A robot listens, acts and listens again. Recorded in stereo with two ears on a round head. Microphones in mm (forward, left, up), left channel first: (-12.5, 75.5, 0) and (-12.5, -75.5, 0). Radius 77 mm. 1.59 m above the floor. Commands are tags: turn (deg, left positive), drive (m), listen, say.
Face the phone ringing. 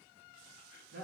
<listen/>
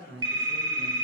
<turn deg="-20"/>
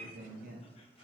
<listen/>
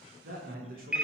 <say>Facing the phone ringing.</say>